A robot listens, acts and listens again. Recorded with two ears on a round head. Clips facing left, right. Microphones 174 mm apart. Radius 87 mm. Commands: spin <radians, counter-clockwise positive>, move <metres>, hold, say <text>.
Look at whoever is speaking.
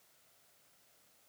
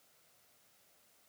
hold
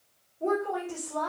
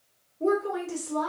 spin -0.79
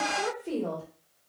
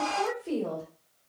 say Facing the woman speaking, 1 to 2 m away.